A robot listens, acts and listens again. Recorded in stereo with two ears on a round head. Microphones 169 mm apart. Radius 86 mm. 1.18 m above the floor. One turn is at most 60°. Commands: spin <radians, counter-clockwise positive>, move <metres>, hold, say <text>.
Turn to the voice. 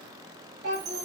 spin -0.87
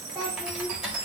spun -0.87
say Found it: a child speaking, straight ahead, 1 to 2 m away.